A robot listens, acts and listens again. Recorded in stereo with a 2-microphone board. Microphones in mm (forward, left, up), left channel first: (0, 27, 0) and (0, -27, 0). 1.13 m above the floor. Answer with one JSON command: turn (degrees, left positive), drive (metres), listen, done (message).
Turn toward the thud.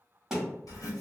{"turn": -30}
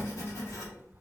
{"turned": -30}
{"listen": true}
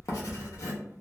{"done": "I heard a thud, but can't make it out now. It was about 25° left or 145° right."}